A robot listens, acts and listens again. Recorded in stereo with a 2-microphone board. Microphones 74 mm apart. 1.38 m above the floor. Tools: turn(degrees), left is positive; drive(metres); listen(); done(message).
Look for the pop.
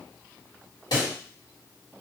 turn(degrees=70)
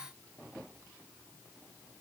listen()
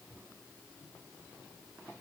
done("I heard a pop, but can't make it out now. It was about straight ahead or 40° left.")